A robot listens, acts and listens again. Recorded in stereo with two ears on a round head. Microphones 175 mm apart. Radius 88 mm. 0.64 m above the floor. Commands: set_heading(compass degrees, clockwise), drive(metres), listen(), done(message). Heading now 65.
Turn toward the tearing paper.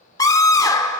listen()
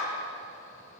listen()
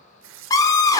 set_heading(155)
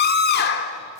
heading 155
listen()
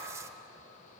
listen()
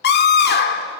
done("I heard tearing paper from this way, but can't make it out now.")